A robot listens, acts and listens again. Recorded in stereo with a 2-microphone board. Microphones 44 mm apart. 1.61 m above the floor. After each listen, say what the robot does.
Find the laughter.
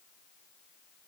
Keep listening.
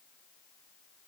Keep listening.
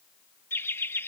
Turn 65° left.
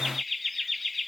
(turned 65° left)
Found it: laughter, straight ahead.